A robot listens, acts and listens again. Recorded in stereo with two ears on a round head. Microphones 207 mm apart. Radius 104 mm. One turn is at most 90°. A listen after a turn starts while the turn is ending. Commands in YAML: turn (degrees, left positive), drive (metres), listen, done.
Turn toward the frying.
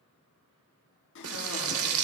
turn: -65
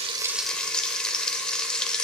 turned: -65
done: "Facing the frying, under 1 m away."